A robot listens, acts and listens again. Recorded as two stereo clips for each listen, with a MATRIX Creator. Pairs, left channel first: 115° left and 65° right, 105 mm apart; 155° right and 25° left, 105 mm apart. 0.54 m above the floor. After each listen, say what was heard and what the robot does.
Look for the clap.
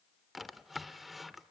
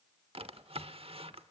Keep listening.
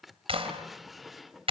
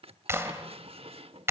The clap: 40° right. Turn 40° right.
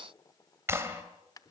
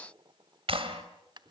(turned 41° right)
Facing the clap, 2 to 4 m away.